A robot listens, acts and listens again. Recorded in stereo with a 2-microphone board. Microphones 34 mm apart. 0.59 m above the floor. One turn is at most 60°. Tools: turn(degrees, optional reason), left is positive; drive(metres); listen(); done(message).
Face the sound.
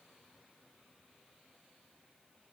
listen()
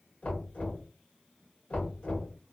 turn(degrees=45, reason="The knocking: about 45° left or 135° left.")
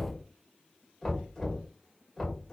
done("Facing the knocking, 1 to 2 m away.")